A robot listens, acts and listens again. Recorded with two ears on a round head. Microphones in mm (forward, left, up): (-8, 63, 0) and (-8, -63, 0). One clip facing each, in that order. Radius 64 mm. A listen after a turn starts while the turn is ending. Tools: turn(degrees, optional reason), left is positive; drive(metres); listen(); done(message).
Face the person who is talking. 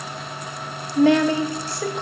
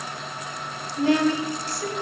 turn(degrees=55, reason="The woman speaking: about 55° left or 125° left.")
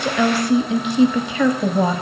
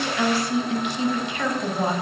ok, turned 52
turn(degrees=70, reason="So it is at 70° left.")
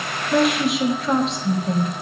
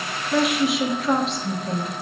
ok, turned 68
done("Found it: a woman speaking, straight ahead.")